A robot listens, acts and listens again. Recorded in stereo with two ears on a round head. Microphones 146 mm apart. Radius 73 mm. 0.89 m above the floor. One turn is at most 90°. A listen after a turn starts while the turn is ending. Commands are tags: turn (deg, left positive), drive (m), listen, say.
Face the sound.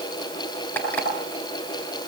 <turn deg="30"/>
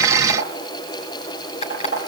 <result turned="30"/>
<turn deg="90"/>
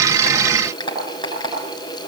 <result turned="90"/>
<turn deg="30"/>
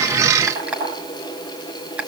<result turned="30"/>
<turn deg="-10"/>
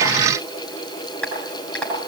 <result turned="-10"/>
<say>Facing the alarm clock.</say>